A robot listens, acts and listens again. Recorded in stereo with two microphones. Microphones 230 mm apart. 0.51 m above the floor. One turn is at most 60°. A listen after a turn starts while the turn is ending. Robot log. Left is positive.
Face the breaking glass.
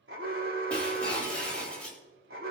cmd yaw +30
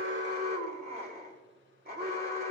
cmd idle
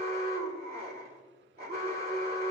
end: I heard breaking glass, but can't make it out now. It was about 25° right or 145° left.